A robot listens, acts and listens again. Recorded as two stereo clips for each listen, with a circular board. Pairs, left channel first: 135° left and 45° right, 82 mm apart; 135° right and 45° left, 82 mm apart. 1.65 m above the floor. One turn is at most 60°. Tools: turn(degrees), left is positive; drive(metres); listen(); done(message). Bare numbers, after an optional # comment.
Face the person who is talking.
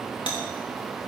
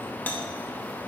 listen()
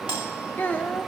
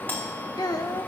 # The child speaking: 160° right.
turn(-60)
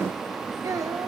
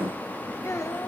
# The child speaking is now 90° right.
turn(-60)
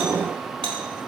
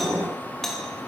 # Nothing new. It was at 30° right.
turn(-30)
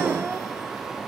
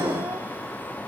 listen()
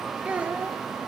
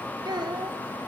# The child speaking is now 25° left.
turn(25)
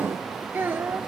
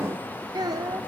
# The child speaking is now 15° left.
turn(15)
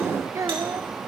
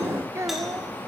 done("Found it: a child speaking, straight ahead.")